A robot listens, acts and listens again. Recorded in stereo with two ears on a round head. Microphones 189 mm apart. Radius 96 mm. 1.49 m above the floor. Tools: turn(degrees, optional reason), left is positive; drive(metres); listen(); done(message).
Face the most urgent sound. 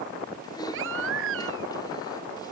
turn(degrees=-70, reason="The baby crying: about 70° right or 110° right.")
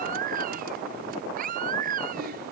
turn(degrees=-40, reason="So it is at 40° right.")
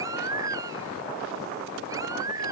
turn(degrees=-15, reason="The baby crying is now 15° right.")
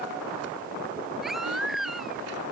done("Found it: a baby crying, straight ahead.")